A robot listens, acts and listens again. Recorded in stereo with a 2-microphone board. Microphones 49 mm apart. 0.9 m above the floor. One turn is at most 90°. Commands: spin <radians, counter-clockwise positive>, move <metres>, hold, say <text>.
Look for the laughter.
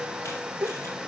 spin -0.79
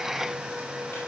hold
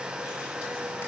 hold
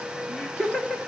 spin 0.35
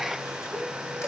hold
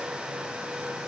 hold
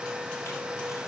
say I heard laughter from this way, but can't make it out now.